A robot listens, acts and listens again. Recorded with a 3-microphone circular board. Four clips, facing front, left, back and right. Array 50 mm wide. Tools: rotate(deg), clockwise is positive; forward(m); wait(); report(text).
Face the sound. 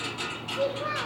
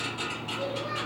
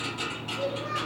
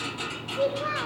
rotate(65)
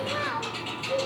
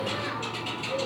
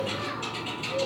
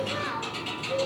rotate(20)
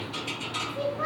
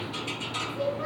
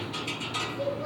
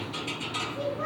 rotate(10)
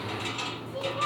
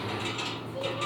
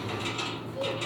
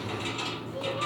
rotate(10)
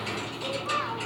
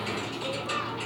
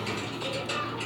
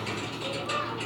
wait()
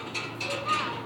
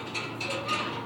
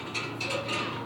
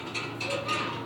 wait()
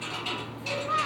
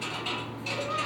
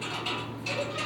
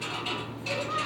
report("Found it: a child speaking, straight ahead, over 4 m away.")